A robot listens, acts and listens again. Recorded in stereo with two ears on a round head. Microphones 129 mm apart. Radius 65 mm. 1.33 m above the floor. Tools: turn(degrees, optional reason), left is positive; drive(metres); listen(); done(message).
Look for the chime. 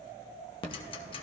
turn(degrees=-45, reason="The chime: about 45° right or 135° right.")
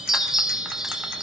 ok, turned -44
done("Facing the chime.")